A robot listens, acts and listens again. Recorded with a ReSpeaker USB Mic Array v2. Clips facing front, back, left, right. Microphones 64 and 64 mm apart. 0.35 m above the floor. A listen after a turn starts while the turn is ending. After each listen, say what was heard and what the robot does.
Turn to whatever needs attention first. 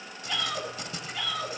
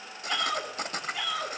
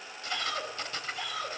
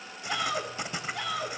The shout: 100° right. Turn 100° right.
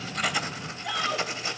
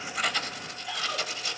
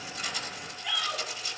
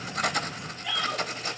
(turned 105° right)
Facing the shout, over 4 m away.